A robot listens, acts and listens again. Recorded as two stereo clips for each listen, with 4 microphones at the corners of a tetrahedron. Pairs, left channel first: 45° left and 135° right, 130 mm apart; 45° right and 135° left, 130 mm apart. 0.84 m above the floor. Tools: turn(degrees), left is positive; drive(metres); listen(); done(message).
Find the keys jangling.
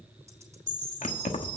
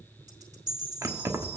turn(degrees=70)
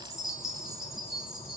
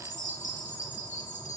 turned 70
listen()
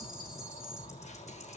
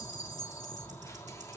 listen()
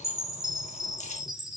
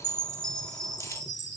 turn(degrees=20)
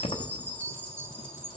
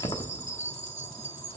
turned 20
done("Facing the keys jangling.")